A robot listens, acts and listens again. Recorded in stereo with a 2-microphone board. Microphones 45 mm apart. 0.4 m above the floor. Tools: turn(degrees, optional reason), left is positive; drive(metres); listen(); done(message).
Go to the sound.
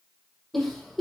turn(degrees=30)
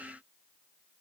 listen()
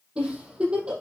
turn(degrees=-25, reason="So it is at 25° right.")
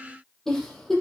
turn(degrees=10, reason="The giggle is now 10° left.")
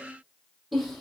drive(metres=1.0)
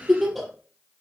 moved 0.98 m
drive(metres=1.0)
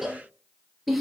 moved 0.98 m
drive(metres=1.0)
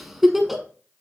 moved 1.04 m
drive(metres=1.0)
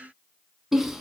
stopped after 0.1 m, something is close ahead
turn(degrees=-10, reason="The giggle is now 10° right.")
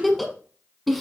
done("Arrived at the giggle, straight ahead.")